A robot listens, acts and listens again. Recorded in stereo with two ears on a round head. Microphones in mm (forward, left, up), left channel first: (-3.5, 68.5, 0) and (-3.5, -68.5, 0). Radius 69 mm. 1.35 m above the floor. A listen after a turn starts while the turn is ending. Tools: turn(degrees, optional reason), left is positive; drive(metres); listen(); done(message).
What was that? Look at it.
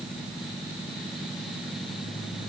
listen()
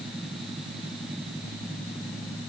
listen()
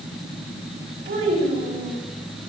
turn(degrees=-90)
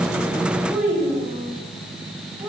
turn(degrees=-10, reason="So it is at 10° right.")
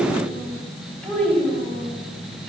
done("Found it: a child speaking, straight ahead.")